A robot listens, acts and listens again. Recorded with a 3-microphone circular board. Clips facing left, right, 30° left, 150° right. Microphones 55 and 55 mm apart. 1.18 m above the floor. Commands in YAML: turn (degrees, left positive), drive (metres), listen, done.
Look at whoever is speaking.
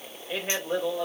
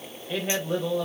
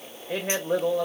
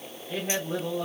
turn: 10
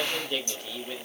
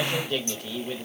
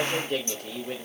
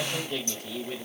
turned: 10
turn: -10
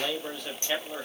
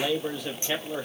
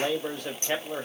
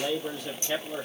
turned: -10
turn: -15
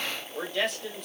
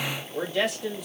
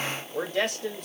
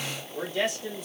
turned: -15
turn: -10
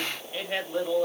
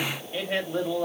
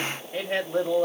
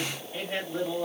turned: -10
turn: -10
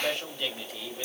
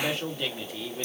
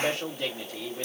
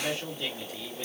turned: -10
done: "Facing the man speaking, 2 to 4 m away."